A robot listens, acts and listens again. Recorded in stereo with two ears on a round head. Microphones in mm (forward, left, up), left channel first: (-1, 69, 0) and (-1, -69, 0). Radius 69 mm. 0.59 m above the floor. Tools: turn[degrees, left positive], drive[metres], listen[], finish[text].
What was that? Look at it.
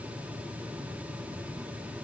Action: listen[]
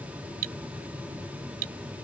Thought: The cutlery clinking: about 65° right or 115° right.
Action: turn[-65]
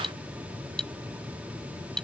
Action: finish[Facing the cutlery clinking.]